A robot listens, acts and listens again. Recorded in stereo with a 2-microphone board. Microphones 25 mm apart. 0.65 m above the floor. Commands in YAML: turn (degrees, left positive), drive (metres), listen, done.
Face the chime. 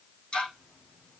listen: true
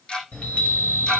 turn: 90
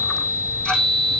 turn: -15
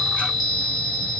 done: "Found it: a chime, straight ahead."